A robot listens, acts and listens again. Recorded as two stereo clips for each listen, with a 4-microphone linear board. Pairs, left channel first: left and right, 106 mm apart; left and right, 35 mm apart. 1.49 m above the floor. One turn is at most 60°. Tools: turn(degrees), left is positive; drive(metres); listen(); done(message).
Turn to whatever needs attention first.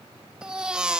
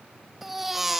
turn(degrees=-30)
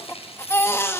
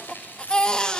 turn(degrees=25)
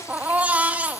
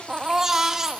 turn(degrees=-15)
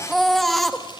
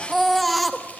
done("Found it: a baby crying, straight ahead, 1 to 2 m away.")